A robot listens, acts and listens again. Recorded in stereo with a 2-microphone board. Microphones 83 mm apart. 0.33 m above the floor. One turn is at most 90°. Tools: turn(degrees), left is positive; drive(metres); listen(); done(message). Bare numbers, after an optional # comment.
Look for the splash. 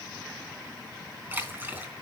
# The splash: about 25° right or 155° right.
turn(-25)
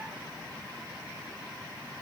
listen()
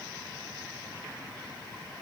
done("I heard a splash, but can't make it out now. It was about straight ahead or 130° right.")